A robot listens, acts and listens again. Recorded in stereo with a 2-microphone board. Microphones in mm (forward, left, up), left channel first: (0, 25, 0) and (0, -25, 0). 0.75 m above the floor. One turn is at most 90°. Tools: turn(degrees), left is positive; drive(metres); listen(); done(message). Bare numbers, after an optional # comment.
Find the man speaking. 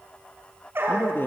# The man speaking: about 45° left or 135° left.
turn(45)
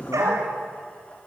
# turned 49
# So it is at 75° left.
turn(75)
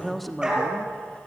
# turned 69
done("Facing the man speaking.")